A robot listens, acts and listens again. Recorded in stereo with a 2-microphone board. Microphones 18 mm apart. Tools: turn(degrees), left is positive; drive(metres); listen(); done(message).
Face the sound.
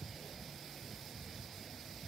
listen()
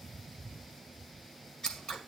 turn(degrees=45)
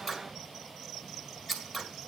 turn(degrees=10)
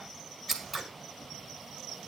done("Found it: scissors, straight ahead, 2 to 4 m away.")